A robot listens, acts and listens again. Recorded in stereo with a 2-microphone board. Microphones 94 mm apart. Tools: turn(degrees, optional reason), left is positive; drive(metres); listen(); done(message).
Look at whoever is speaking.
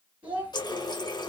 turn(degrees=-20, reason="The child speaking: about 20° right or 160° right.")
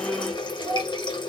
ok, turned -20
done("Found it: a child speaking, straight ahead, 1 to 2 m away.")